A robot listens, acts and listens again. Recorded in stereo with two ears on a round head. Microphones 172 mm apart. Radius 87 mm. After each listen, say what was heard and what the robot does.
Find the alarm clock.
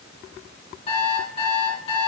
The alarm clock: about 30° left or 150° left. Turn 30° left.
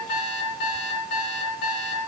So it is at 120° left. Turn 120° left.
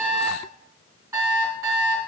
The alarm clock is now 15° right. Turn 15° right.
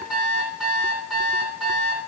Facing the alarm clock, 2 to 4 m away.